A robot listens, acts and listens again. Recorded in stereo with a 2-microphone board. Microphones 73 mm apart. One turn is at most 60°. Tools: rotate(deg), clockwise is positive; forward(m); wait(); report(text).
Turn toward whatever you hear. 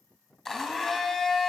rotate(-30)
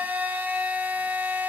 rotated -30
rotate(20)
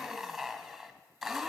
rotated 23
report("Facing the blender, 1 to 2 m away.")